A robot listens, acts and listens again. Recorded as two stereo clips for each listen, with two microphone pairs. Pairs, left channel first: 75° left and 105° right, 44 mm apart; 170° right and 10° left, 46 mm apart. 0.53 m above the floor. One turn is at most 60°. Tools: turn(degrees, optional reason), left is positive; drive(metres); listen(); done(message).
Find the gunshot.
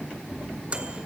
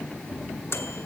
turn(degrees=60, reason="The gunshot: 140° left.")
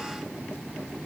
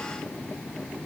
turn(degrees=60, reason="Nothing new. It was at 80° left.")
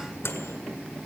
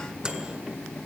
turn(degrees=20, reason="Nothing new. It was at 20° left.")
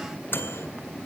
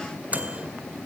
done("I heard a gunshot from this way, but can't make it out now.")